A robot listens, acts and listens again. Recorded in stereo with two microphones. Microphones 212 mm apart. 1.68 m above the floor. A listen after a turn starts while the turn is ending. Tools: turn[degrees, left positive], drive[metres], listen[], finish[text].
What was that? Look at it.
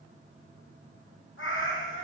Thought: The cat meowing: about 70° left or 110° left.
Action: turn[70]
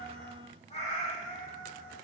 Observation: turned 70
Thought: So it is at 35° left.
Action: turn[35]
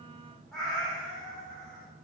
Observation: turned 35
Action: finish[Facing the cat meowing.]